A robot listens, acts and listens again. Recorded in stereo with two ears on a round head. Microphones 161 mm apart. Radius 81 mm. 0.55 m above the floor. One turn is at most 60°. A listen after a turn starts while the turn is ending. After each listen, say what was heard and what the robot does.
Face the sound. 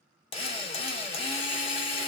The drill: about 35° left or 145° left. Turn 35° left.
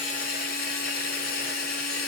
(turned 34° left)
So it is at 105° left. Turn 60° left.
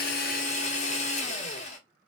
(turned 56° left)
The drill is now 50° left. Turn 50° left.
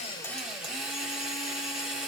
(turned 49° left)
Facing the drill.